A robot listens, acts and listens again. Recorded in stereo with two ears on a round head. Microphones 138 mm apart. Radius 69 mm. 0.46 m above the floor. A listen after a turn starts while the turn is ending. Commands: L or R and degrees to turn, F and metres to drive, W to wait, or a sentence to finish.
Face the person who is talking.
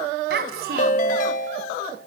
R70
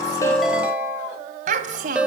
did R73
R55
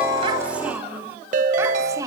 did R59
R20
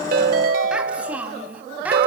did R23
R10
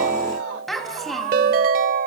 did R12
Facing the child speaking.